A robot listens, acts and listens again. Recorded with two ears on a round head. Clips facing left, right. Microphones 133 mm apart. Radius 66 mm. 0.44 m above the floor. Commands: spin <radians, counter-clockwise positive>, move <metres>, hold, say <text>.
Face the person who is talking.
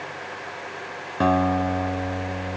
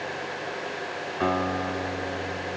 hold
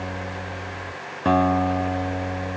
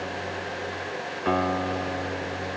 hold
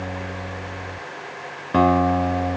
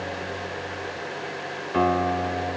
say I can't make out anyone speaking to turn to.